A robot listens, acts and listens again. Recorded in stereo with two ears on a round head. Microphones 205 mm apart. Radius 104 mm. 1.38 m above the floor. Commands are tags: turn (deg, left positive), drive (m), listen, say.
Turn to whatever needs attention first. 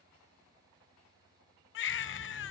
<turn deg="55"/>
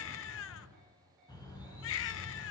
<turn deg="65"/>
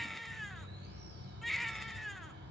<say>Found it: a baby crying, straight ahead, under 1 m away.</say>